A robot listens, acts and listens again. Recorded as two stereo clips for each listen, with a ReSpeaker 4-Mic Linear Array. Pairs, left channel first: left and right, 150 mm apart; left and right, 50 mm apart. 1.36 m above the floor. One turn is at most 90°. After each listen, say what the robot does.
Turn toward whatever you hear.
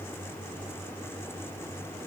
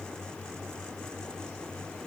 Keep listening.
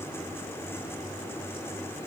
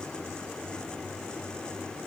Keep listening.
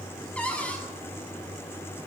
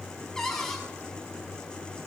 Turn 30° left.
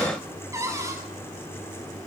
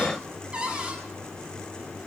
Turn 20° right.
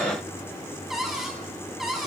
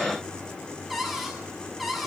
Facing the cupboard door, over 4 m away.